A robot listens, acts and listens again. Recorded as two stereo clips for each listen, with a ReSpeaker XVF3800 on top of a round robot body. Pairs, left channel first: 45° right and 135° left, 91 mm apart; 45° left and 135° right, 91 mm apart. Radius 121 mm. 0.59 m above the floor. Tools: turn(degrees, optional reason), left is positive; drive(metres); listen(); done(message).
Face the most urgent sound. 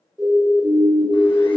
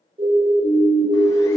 turn(degrees=-140, reason="The siren: 140° right.")
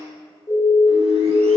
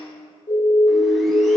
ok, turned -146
done("Found it: a siren, straight ahead.")